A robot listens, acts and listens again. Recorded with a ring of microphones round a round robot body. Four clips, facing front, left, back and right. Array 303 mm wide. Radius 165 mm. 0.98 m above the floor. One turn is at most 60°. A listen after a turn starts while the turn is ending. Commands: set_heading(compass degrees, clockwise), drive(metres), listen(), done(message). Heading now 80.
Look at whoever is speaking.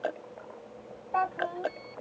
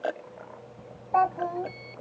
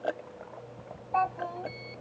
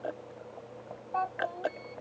set_heading(20)
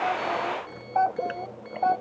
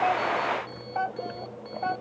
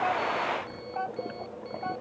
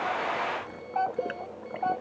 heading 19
set_heading(359)
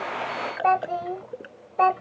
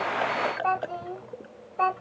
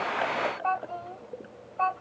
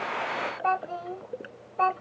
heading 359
done("Found it: a child speaking, straight ahead.")